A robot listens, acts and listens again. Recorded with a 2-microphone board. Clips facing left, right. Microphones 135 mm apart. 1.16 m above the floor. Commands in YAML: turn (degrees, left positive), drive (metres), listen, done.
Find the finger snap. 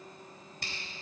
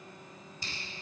turn: 70
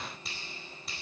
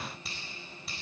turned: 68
done: "Facing the finger snap, over 4 m away."